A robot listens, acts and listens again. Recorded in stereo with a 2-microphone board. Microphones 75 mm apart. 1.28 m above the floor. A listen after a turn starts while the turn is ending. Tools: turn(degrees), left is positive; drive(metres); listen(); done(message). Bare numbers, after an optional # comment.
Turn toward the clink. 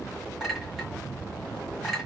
turn(-30)
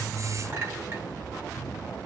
# So it is at 145° right.
turn(-145)
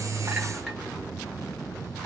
listen()
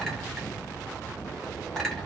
done("Found it: a clink, straight ahead, 1 to 2 m away.")